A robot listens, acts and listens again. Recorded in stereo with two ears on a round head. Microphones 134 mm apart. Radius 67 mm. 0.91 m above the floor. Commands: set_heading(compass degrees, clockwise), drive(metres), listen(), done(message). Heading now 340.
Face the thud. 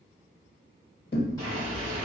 set_heading(270)
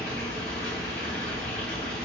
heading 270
listen()
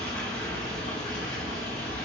done("I heard a thud, but can't make it out now. It was about straight ahead or 40° left.")